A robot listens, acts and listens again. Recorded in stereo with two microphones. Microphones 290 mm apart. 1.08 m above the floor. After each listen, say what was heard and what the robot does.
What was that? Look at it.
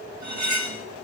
The cutlery clinking: about 70° right or 110° right. Turn 70° right.
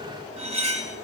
So it is at 25° right. Turn 25° right.
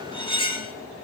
The cutlery clinking is now 15° left. Turn 15° left.
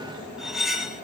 Found it: cutlery clinking, straight ahead.